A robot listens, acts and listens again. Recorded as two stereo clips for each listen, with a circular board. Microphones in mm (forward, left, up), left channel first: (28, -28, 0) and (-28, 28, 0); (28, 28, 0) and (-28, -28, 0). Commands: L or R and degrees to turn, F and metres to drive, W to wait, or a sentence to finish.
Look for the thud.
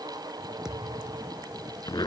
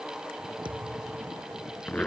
R140
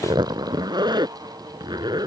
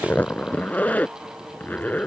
Facing where the thud came from. I can't hear it now.